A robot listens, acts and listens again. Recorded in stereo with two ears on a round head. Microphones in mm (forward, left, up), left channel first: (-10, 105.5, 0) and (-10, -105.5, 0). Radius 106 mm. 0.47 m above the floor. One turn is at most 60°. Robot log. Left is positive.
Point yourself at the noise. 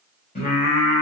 note: The singing: about 30° left or 150° left.
cmd yaw +30
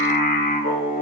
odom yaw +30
note: The singing: about 35° left or 145° left.
cmd yaw +35
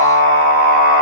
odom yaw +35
note: The singing: about 40° left or 140° left.
cmd yaw +40
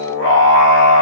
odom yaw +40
note: So it is at 135° left.
cmd yaw +60
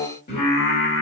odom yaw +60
note: The singing is now 50° left.
cmd yaw +50
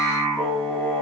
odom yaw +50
note: The singing is now 10° left.
cmd yaw +10
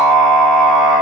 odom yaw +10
end: Found it: singing, straight ahead.